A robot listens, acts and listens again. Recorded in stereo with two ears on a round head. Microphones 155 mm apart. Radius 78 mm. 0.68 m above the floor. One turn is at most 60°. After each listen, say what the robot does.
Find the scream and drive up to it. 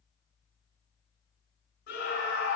Turn 60° left.
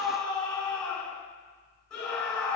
Drive 1.0 m forward.
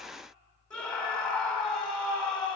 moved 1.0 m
Drive 1.0 m forward.
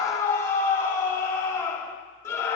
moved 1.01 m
Turn 15° left.
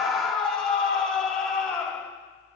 Drive 1.0 m forward.
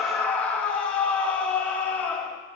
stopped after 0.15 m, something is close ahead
Turn 10° left.
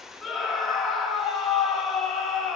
Arrived at the scream, straight ahead.